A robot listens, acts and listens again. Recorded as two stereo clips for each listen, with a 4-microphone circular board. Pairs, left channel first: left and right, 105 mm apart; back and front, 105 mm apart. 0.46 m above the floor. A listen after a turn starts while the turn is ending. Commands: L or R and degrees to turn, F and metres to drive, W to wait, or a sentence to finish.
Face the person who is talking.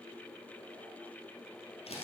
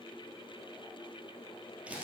W
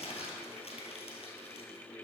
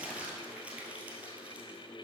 W
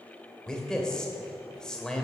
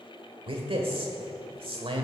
L10
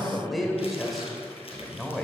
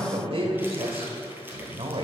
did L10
Found it: a man speaking, straight ahead.